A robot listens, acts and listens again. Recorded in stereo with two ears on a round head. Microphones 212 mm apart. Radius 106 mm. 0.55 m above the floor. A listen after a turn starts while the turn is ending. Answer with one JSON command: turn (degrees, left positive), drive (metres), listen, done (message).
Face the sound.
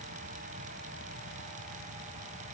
{"listen": true}
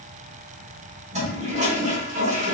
{"turn": -30}
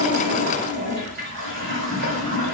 {"turn": -120}
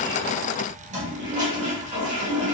{"turn": -35}
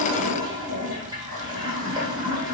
{"turn": -20}
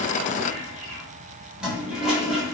{"done": "Facing the toilet flushing, 1 to 2 m away."}